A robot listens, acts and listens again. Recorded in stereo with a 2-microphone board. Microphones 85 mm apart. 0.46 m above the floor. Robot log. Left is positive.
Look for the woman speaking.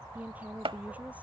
note: The woman speaking: about 15° right or 165° right.
cmd yaw -15
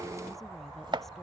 cmd idle
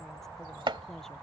cmd idle
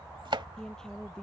cmd yaw +30
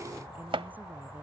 cmd idle
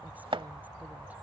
cmd idle
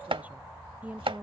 note: So it is at 15° right.
cmd yaw -15
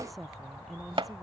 end: Facing the woman speaking.